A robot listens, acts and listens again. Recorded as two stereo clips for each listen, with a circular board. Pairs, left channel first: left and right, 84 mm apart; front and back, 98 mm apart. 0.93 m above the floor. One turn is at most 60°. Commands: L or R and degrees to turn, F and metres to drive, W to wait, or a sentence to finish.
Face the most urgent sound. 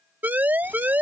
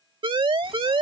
R60
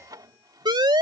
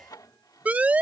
R60
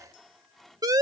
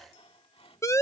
R55
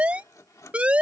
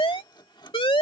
R15
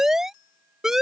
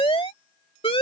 Facing the siren.